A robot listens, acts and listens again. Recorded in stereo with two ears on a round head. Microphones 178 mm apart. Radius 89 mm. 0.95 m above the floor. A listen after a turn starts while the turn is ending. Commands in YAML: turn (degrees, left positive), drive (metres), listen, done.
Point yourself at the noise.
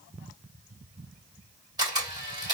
turn: -20
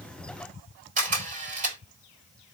turn: -140
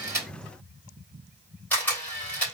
turn: 10
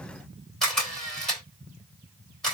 done: "Facing the camera shutter, 2 to 4 m away."